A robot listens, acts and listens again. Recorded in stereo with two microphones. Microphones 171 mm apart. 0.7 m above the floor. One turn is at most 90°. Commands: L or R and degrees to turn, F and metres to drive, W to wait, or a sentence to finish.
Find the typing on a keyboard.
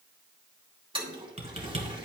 R35
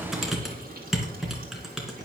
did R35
Found it: typing on a keyboard, straight ahead.